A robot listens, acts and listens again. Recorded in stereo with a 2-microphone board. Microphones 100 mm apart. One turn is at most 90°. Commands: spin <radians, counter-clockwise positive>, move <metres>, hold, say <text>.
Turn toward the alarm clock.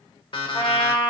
spin 0.96
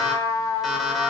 say Facing the alarm clock, 1 to 2 m away.